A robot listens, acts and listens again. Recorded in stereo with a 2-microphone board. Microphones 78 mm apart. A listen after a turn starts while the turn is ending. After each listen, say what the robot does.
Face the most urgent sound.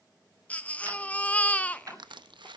Turn 15° left.
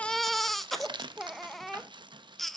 Found it: a baby crying, straight ahead, under 1 m away.